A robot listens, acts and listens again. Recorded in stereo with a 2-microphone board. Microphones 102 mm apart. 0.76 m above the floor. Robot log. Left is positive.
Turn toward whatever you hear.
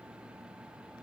cmd idle
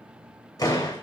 note: The door slam: about 35° left or 145° left.
cmd yaw +35
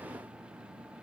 cmd idle
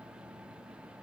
end: I heard a door slam, but can't make it out now. It was about straight ahead or 110° left.